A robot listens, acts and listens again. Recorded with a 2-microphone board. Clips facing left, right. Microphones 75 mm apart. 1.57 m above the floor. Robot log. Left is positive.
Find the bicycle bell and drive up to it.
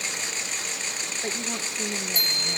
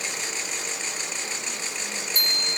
note: The bicycle bell: about 50° right or 130° right.
cmd yaw -50
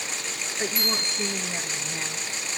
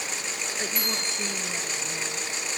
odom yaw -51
cmd fwd 1.0
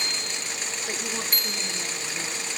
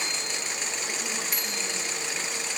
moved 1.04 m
note: The bicycle bell is now 10° right.
cmd yaw -10
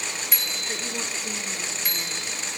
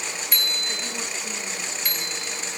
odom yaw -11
cmd fwd 1.0
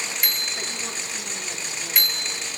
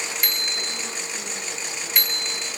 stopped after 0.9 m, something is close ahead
end: Arrived at the bicycle bell, straight ahead.